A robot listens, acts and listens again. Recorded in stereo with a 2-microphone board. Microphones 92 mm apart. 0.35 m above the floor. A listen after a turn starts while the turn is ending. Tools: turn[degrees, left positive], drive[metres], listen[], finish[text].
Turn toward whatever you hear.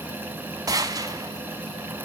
Thought: The gunshot: about 40° right or 140° right.
Action: turn[-40]
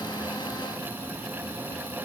Action: listen[]
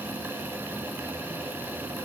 Action: finish[I heard a gunshot, but can't make it out now. It was about straight ahead or 100° right.]